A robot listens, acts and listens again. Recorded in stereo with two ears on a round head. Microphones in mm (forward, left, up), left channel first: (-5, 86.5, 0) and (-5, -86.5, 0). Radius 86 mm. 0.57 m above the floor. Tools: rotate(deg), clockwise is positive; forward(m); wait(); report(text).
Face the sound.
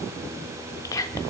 rotate(-20)
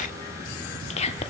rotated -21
rotate(-140)
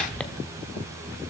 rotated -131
report("Facing the whispering, 1 to 2 m away.")